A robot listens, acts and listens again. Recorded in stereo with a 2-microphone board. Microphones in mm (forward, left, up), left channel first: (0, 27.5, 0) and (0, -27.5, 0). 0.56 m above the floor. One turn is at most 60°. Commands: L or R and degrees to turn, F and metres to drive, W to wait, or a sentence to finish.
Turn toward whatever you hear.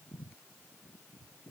W
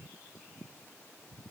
W
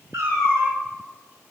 R60
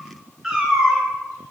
R10
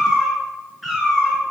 Found it: a cat meowing, straight ahead, over 4 m away.